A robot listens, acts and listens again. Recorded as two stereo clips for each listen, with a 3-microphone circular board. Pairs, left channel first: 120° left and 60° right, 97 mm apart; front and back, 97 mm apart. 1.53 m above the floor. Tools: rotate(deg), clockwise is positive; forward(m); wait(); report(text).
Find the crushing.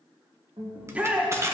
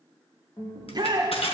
report("Facing the crushing, 1 to 2 m away.")